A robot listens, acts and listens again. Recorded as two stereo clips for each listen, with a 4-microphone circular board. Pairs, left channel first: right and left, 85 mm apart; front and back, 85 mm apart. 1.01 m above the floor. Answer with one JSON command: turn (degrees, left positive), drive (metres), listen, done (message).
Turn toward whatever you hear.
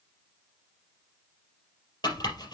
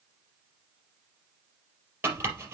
{"turn": -120}
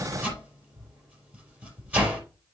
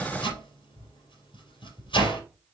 {"turn": 15}
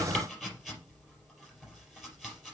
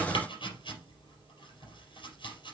{"done": "Facing the chopping."}